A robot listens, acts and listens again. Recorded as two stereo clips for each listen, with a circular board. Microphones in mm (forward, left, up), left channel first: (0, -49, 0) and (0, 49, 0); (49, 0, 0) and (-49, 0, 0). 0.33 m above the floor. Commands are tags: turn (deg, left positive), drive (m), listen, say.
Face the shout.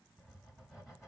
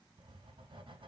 <listen/>
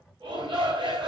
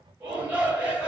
<turn deg="105"/>
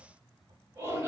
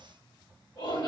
<turn deg="30"/>
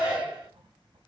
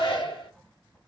<turn deg="10"/>
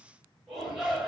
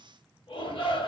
<say>Found it: a shout, straight ahead, 2 to 4 m away.</say>